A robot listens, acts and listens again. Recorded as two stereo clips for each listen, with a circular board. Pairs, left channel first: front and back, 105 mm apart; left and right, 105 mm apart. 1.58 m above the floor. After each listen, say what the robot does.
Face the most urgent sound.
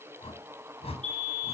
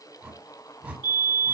Turn 155° right.
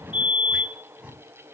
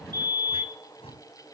Turn 35° right.
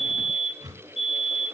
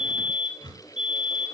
Turn 10° right.
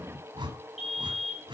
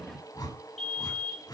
Facing the fire alarm.